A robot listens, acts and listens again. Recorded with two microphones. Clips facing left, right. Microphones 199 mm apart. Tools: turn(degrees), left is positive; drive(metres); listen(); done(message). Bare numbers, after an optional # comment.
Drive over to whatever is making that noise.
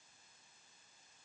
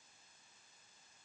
listen()
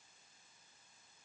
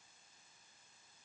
listen()
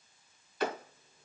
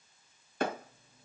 # The clap: about 45° right or 135° right.
turn(-45)
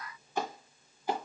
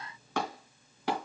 # So it is at 85° right.
turn(-85)
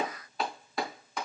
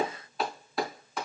drive(1.0)
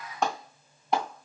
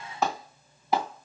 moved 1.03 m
drive(1.0)
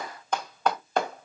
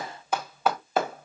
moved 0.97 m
drive(1.0)
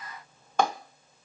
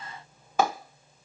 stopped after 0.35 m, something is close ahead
# The clap is now 10° right.
turn(-10)
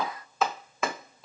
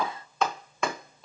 done("Arrived at the clap, straight ahead.")